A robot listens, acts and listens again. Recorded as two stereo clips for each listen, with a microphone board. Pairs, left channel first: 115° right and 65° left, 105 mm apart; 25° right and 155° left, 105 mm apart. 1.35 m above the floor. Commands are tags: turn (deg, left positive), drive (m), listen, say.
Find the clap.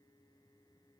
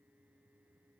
<listen/>
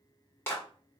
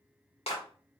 <turn deg="-45"/>
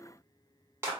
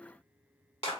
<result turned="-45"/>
<say>Facing the clap, 1 to 2 m away.</say>